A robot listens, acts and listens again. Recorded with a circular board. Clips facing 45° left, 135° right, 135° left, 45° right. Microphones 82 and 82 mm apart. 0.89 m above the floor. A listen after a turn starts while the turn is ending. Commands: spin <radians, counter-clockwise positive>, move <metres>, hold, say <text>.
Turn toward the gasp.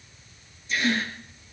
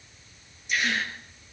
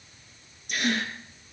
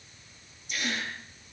spin 2.62
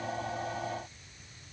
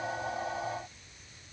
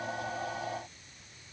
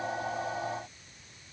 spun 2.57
say I heard a gasp from this way, but can't make it out now.